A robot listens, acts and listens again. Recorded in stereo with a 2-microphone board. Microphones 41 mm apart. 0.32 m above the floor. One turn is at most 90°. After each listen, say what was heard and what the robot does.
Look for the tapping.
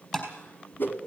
Turn 30° left.
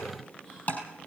So it is at 135° left. Turn 90° left.
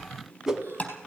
The tapping is now 35° left. Turn 35° left.
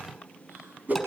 Keep listening.
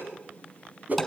Keep listening.
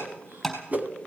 Found it: tapping, straight ahead.